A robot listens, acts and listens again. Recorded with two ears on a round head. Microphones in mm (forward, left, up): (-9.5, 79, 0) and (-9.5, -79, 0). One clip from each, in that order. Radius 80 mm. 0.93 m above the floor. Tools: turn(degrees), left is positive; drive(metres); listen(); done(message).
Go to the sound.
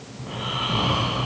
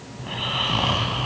turn(degrees=-60)
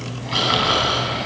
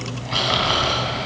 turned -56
drive(metres=1.0)
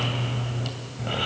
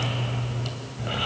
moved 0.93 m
drive(metres=1.0)
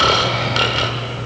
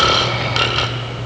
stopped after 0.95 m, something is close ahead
turn(degrees=-10)
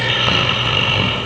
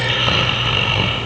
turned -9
done("I am next to the snoring.")